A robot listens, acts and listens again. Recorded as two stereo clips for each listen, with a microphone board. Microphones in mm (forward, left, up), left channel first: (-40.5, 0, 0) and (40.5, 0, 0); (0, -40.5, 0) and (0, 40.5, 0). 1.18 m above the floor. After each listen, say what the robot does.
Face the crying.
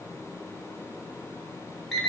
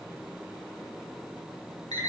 Keep listening.
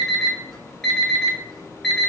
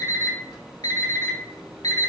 Keep listening.
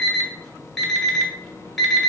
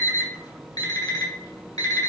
I can't make out crying, only an alarm clock.